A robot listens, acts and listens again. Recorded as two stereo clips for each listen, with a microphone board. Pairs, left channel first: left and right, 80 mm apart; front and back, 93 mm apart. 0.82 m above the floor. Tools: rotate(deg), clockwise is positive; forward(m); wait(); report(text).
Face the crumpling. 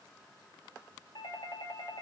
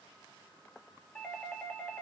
wait()
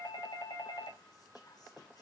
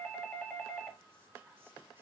wait()
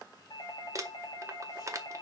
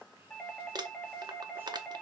rotate(135)
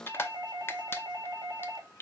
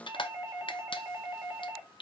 rotate(-30)
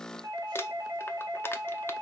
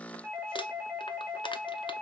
wait()
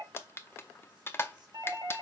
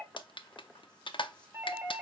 rotate(-30)
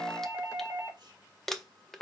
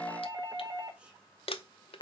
report("Found it: crumpling, straight ahead.")